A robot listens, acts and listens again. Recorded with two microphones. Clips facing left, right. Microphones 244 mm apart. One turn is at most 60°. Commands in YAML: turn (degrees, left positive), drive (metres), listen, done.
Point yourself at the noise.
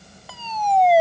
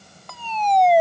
turn: 30
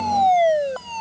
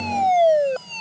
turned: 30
turn: -25
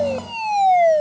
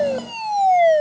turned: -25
turn: -10
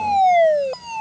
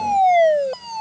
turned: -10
done: "Facing the fire alarm."